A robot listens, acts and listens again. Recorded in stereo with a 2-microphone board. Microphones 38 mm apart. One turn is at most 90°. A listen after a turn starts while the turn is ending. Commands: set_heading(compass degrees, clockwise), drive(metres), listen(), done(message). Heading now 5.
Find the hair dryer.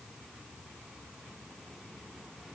listen()
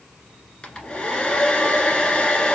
set_heading(340)
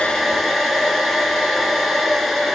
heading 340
done("Facing the hair dryer, 1 to 2 m away.")